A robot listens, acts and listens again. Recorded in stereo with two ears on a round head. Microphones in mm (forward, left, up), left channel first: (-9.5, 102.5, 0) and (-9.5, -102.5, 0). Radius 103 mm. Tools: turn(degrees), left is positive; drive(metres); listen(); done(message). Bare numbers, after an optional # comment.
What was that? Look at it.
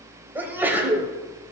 turn(-30)
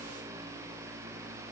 listen()
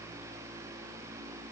done("I heard a sneeze, but can't make it out now. It was about 20° left or 140° right.")